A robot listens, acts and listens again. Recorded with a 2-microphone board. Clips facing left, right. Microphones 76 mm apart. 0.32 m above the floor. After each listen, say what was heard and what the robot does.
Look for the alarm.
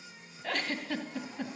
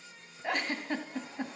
Keep listening.
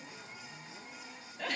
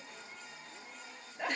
Keep listening.
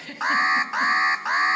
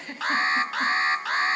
The alarm: about 20° left or 160° left. Turn 20° left.
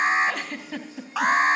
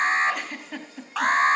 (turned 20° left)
Facing the alarm, 1 to 2 m away.